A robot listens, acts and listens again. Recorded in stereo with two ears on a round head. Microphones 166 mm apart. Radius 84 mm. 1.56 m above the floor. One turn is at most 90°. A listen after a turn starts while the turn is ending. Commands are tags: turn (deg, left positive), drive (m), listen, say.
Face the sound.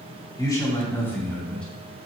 <turn deg="30"/>
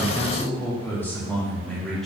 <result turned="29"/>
<turn deg="30"/>
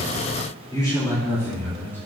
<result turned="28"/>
<turn deg="30"/>
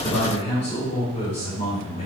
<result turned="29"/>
<turn deg="90"/>
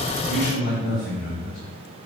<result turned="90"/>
<turn deg="50"/>
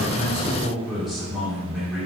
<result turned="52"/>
<say>Facing the man speaking, 2 to 4 m away.</say>